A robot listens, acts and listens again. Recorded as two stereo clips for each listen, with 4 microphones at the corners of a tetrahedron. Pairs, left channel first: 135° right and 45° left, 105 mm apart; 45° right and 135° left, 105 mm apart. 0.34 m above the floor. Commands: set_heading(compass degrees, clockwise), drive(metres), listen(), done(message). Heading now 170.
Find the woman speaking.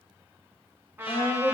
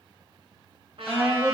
set_heading(315)
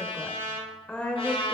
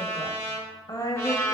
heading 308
set_heading(18)
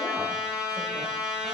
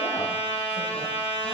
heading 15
listen()
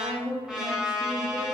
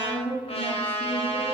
set_heading(60)
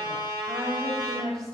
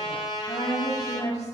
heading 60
done("Found it: a woman speaking, straight ahead, 1 to 2 m away.")